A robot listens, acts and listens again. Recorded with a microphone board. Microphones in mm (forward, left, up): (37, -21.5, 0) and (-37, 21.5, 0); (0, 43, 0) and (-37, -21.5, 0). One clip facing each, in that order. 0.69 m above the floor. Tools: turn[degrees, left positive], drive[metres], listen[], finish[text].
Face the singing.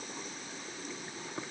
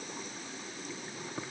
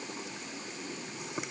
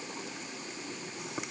Action: listen[]
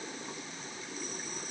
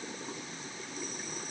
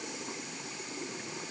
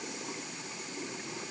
Action: listen[]
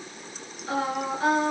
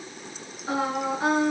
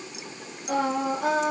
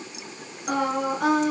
Thought: The singing: 140° right.
Action: turn[-140]
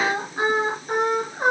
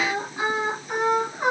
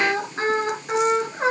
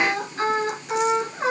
Action: finish[Facing the singing.]